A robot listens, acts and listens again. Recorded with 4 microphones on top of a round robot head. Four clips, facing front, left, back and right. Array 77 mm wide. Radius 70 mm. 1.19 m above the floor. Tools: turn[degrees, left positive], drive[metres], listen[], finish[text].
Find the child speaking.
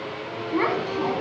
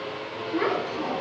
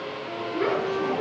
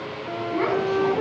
Thought: The child speaking: 10° right.
Action: turn[-10]
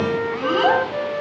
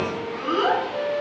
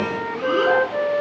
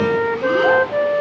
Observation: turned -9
Action: listen[]
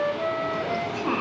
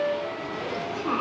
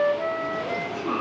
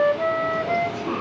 Action: finish[Found it: a child speaking, straight ahead, over 4 m away.]